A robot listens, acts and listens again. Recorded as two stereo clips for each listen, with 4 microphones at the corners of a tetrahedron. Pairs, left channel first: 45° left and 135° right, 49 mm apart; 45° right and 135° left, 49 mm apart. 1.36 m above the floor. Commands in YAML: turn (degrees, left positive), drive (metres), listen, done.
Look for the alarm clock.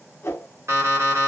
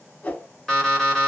turn: -120
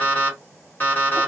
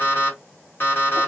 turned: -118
done: "Facing the alarm clock, 1 to 2 m away."